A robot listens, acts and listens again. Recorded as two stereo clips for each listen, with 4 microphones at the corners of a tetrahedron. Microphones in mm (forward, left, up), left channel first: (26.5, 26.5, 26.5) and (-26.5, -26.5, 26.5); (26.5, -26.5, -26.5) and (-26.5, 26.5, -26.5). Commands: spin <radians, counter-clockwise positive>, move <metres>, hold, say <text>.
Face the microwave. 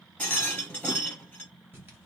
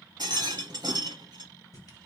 hold
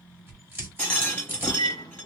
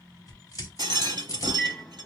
spin 0.52
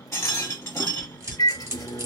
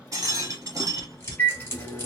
spin 0.26
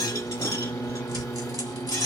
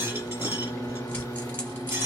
say Facing the microwave.